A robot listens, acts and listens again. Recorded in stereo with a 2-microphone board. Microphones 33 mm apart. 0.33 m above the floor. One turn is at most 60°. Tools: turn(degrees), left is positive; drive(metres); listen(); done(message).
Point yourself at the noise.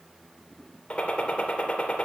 turn(degrees=35)
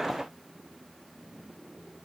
listen()
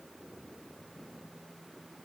done("I heard a gunshot, but can't make it out now. It was about straight ahead or 110° left.")